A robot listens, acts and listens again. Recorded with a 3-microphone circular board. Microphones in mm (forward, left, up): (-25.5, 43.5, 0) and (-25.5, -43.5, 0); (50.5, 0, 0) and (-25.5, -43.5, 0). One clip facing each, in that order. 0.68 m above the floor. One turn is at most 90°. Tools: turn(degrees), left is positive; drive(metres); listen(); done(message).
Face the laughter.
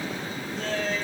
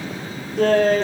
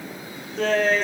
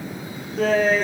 turn(degrees=-65)
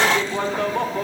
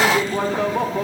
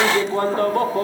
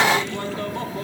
done("Found it: laughter, straight ahead.")